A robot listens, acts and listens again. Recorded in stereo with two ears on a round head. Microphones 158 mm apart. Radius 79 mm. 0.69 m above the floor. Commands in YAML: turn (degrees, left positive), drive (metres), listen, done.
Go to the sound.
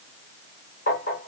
turn: 55
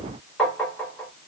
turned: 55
drive: 1.0
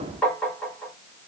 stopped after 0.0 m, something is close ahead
done: "Something is in my way. I am facing the tapping but have not reached it."